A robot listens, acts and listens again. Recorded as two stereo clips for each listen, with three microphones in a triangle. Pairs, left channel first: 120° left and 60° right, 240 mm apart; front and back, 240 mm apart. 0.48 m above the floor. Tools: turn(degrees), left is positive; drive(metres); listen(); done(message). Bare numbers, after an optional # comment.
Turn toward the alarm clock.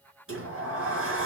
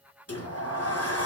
listen()
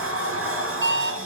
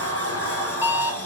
# The alarm clock: 100° right.
turn(-100)
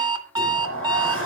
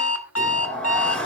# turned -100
# The alarm clock is now 15° left.
turn(15)
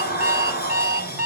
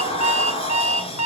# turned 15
done("Found it: an alarm clock, straight ahead, 2 to 4 m away.")